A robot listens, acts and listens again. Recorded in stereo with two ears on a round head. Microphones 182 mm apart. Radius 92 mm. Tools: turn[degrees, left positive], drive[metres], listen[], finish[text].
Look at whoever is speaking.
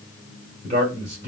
Thought: The man speaking: about 35° right or 145° right.
Action: turn[-35]
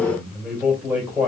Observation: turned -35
Action: finish[Found it: a man speaking, straight ahead, 2 to 4 m away.]